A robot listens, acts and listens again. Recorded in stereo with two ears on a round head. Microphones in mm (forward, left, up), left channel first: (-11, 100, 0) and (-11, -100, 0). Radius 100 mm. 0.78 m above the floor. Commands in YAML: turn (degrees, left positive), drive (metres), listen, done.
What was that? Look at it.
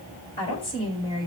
turn: 20
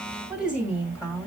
turn: -10
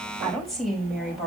done: "Found it: a woman speaking, straight ahead, 2 to 4 m away."